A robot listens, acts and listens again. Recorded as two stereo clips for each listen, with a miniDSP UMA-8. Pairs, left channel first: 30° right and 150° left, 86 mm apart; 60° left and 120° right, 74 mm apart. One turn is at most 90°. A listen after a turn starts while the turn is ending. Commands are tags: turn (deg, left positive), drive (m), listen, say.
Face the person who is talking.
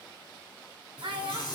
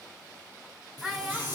<turn deg="90"/>
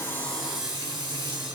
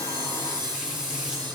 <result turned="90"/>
<turn deg="70"/>
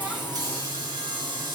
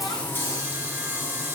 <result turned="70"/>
<listen/>
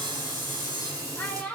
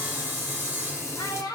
<turn deg="40"/>
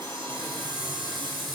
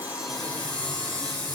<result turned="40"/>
<listen/>
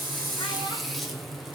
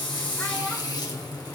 <listen/>
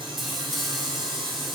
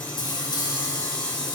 <say>Facing where the child speaking came from. I can't hear it now.</say>